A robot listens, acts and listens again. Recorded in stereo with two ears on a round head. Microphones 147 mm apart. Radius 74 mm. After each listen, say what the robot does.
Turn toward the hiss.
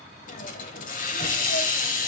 Turn 55° left.
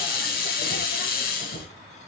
Turn 70° left.
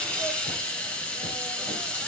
Turn 10° left.
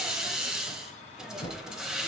Facing the hiss.